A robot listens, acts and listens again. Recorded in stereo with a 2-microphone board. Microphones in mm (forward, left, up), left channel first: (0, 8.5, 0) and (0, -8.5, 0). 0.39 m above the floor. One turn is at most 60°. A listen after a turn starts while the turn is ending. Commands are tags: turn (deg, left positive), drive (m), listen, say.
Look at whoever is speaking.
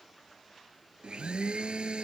<listen/>
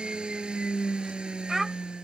<turn deg="-25"/>
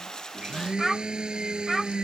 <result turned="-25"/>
<say>Facing the child speaking.</say>